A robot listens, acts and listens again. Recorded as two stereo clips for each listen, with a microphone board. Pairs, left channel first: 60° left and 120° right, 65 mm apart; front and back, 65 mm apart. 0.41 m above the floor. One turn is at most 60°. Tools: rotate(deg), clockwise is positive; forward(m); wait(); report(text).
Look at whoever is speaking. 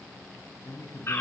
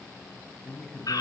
rotate(-60)
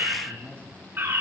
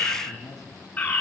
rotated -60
report("Found it: a man speaking, straight ahead.")